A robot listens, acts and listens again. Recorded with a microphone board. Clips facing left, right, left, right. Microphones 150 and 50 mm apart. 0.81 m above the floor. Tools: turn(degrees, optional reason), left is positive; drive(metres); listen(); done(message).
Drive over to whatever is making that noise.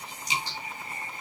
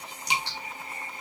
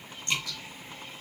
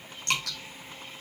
turn(degrees=-65, reason="The dripping: about 65° right or 115° right.")
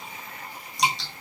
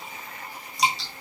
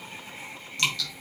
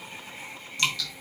drive(metres=1.0)
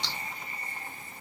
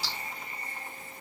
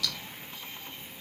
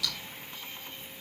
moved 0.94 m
drive(metres=1.0)
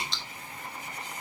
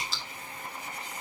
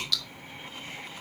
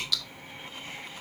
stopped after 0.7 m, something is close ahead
done("I am next to the dripping.")